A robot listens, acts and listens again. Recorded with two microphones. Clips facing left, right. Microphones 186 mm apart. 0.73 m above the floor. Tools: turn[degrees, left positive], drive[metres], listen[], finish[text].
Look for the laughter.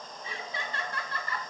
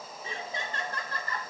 Thought: The laughter: about 40° right or 140° right.
Action: turn[-40]
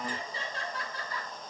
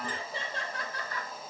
Thought: So it is at 105° right.
Action: turn[-105]
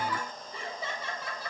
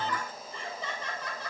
Action: finish[Facing the laughter.]